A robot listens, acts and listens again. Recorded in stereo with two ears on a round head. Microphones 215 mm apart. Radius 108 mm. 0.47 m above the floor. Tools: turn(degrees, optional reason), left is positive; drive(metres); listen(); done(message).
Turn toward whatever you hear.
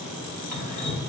turn(degrees=35, reason="The dripping: about 35° left or 145° left.")
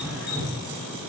done("Found it: dripping, straight ahead.")